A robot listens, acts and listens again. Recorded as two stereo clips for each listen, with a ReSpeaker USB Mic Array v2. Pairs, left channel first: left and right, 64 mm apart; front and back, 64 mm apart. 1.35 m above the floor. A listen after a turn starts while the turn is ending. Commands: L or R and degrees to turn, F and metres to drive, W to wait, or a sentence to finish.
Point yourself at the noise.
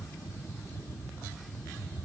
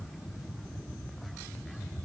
W
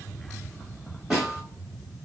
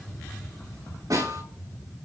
R175
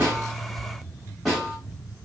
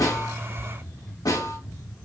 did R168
Facing the snare drum, over 4 m away.